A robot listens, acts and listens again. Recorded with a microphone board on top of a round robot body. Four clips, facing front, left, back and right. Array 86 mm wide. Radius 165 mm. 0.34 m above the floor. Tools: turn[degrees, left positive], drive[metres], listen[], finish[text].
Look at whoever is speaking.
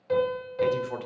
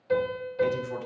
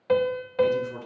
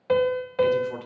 Thought: The man speaking: 25° right.
Action: turn[-25]
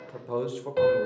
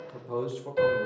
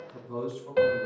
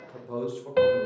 Action: finish[Facing the man speaking, 1 to 2 m away.]